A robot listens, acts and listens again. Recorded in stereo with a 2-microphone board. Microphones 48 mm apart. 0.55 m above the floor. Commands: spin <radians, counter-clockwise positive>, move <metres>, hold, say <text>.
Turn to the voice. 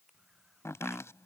hold
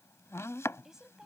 spin -0.52
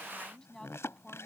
spin 0.17
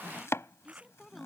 say Found it: a woman speaking, straight ahead.